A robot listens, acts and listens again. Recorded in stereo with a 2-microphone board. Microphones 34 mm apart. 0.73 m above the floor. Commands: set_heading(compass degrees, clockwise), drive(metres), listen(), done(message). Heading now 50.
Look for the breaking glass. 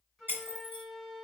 set_heading(120)
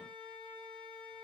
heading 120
listen()
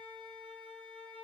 done("I heard breaking glass, but can't make it out now. It was about straight ahead or 40° right.")